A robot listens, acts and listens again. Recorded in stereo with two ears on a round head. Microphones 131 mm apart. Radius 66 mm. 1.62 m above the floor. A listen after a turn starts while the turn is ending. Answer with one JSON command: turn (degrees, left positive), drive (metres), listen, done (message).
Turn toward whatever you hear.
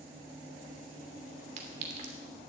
{"turn": -50}
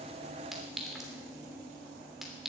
{"done": "Found it: a clink, straight ahead."}